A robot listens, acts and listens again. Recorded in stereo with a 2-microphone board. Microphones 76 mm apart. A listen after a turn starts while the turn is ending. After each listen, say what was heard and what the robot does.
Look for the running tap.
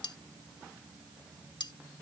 Keep listening.
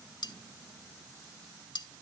Keep listening.
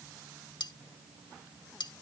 I can't make out a running tap to turn to.